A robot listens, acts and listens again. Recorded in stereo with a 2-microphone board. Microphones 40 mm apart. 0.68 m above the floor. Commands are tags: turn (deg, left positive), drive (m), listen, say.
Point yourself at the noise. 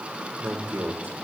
<turn deg="-65"/>
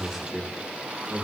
<turn deg="-10"/>
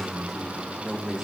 <say>Found it: a man speaking, straight ahead, 2 to 4 m away.</say>